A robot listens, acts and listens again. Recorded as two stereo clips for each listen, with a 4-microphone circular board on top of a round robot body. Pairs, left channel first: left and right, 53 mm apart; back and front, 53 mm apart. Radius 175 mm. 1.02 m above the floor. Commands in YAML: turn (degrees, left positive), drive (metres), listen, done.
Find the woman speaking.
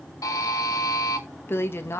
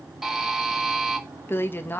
turn: 125
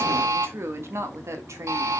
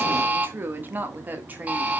turn: -60
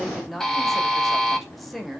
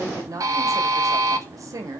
done: "Found it: a woman speaking, straight ahead, 2 to 4 m away."